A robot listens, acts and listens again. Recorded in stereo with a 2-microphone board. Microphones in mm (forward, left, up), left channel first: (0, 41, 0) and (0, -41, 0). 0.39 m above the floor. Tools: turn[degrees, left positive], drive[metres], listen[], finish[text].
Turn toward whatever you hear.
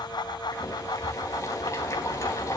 Thought: The boiling: about 40° left or 140° left.
Action: turn[40]
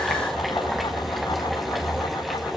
Action: finish[Found it: boiling, straight ahead.]